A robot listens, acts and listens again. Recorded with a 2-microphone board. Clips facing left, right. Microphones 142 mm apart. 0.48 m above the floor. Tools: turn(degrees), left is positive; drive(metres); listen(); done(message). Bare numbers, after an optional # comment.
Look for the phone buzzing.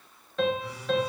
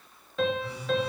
# The phone buzzing: about 35° right or 145° right.
turn(-35)
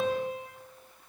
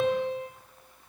listen()
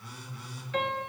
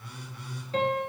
# So it is at 110° right.
turn(-110)
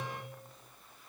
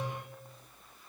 listen()
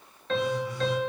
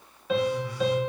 # The phone buzzing is now 25° left.
turn(25)
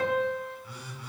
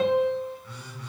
# The phone buzzing is now 10° left.
turn(10)
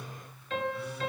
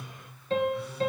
done("Facing the phone buzzing.")